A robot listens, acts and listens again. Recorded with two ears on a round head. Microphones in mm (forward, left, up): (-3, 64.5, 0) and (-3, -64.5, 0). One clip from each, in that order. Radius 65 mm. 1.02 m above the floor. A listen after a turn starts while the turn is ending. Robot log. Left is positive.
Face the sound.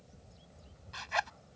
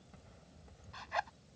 note: The zipper: about 60° left or 120° left.
cmd yaw +60
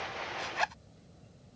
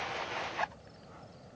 note: So it is at 65° left.
cmd yaw +65
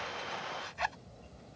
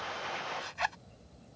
note: The zipper is now 15° right.
cmd yaw -15
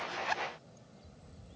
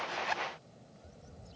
end: Found it: a zipper, straight ahead.